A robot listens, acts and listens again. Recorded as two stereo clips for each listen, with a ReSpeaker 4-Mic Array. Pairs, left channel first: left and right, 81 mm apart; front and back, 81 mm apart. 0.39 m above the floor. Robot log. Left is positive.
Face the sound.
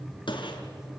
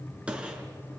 note: The gunshot: 105° left.
cmd yaw +105
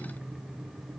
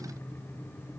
end: I heard a gunshot from this way, but can't make it out now.